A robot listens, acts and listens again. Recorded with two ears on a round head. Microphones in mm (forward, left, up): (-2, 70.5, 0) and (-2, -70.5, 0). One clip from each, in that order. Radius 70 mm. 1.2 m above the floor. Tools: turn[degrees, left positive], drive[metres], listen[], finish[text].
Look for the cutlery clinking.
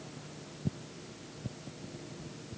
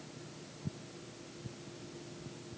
Action: listen[]
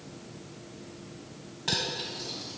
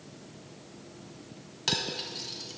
Thought: The cutlery clinking: about 65° right or 115° right.
Action: turn[-65]
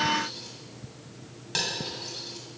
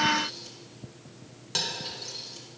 Action: finish[Found it: cutlery clinking, straight ahead, 1 to 2 m away.]